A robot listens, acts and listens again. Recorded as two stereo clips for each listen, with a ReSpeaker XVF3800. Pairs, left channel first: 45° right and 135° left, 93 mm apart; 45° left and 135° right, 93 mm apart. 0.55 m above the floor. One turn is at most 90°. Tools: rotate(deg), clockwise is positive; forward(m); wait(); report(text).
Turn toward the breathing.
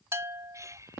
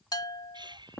rotate(90)
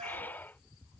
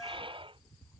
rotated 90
rotate(90)
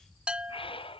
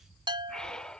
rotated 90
rotate(35)
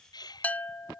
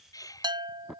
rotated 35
report("Found it: breathing, straight ahead.")